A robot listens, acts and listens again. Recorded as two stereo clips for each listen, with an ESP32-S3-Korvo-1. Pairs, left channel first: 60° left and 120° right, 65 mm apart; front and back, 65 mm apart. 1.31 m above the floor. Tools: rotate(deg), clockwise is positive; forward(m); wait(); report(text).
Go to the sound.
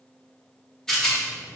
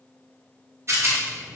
rotate(-140)
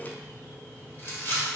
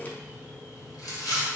forward(1.0)
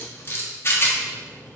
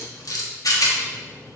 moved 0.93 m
rotate(-10)
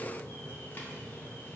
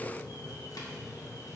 wait()
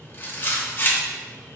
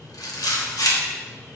forward(1.0)
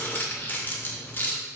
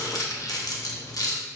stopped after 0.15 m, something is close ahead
report("I am next to the rattle.")